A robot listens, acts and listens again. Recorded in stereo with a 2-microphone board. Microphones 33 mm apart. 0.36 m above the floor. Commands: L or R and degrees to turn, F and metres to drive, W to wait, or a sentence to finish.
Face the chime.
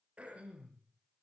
W
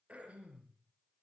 W
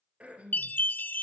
L65
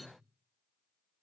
W
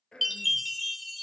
Facing the chime.